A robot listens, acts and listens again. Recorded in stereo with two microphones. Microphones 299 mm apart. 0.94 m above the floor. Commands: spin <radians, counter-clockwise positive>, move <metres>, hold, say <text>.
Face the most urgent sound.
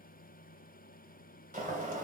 hold
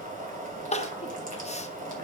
spin 0.35
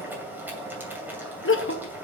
spin 2.36
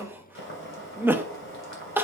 say Found it: crying, straight ahead.